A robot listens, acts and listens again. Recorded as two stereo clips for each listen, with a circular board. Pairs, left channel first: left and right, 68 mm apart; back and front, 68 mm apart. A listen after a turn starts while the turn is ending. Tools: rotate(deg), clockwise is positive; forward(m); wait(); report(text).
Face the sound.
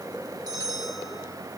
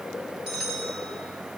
rotate(85)
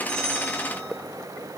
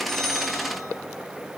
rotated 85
wait()
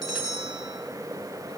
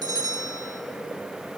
report("Found it: a bell, straight ahead, 2 to 4 m away.")